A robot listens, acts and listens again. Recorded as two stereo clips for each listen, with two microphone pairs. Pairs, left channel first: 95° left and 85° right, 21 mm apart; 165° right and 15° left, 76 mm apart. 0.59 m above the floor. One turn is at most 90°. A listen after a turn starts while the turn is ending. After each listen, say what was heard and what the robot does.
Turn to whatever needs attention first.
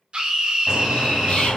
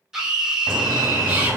The scream: 65° right. Turn 65° right.
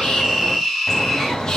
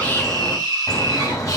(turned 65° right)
Facing the scream, 1 to 2 m away.